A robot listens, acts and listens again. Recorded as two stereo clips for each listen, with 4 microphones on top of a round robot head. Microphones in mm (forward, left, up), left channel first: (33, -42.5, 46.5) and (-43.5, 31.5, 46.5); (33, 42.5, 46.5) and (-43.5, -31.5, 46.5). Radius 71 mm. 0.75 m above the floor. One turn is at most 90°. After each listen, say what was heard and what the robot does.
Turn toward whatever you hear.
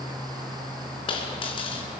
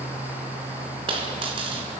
The dropped coin: 90° right. Turn 90° right.
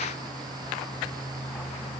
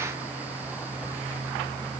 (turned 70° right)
Nothing new. It was at 20° right. Turn 20° right.
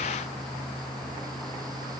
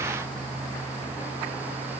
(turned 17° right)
I heard a dropped coin from this way, but can't make it out now.